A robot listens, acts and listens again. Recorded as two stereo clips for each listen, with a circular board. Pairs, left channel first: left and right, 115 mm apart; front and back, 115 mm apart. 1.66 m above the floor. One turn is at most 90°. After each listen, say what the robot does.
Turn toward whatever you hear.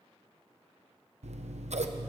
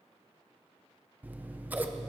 Turn 90° right.
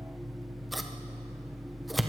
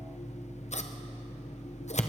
Found it: scissors, straight ahead.